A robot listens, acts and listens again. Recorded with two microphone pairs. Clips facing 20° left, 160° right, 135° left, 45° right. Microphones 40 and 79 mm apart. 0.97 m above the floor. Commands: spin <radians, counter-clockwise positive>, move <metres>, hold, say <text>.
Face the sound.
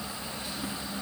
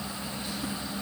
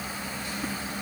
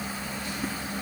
hold
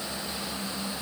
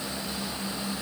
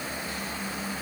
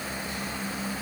hold
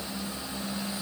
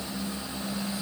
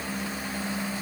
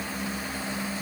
say I can't make out anything to turn to.